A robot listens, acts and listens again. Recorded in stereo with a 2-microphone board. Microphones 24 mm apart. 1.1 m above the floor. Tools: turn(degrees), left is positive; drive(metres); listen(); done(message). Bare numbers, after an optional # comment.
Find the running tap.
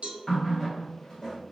# The running tap: about 35° left or 145° left.
turn(35)
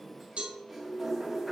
done("Found it: a running tap, straight ahead.")